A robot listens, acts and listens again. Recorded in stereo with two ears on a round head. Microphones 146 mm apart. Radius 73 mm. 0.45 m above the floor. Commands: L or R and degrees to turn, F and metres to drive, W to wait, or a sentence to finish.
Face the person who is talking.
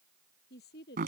L65
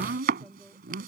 W
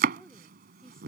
Found it: a woman speaking, straight ahead.